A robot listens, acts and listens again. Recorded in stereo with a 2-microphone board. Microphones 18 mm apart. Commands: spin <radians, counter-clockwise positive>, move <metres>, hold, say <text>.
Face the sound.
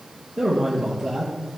spin -0.52
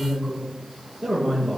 spin 0.44
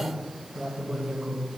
spin 0.44
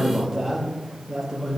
say Facing the man speaking, over 4 m away.